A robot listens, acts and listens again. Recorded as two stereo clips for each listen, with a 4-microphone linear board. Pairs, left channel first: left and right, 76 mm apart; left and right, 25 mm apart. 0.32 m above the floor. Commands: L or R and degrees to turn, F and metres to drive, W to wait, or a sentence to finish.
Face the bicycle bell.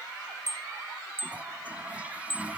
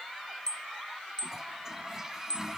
L30
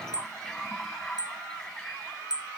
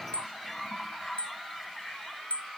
L120
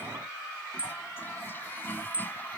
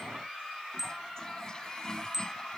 R20
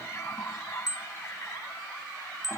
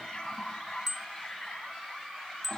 Found it: a bicycle bell, straight ahead.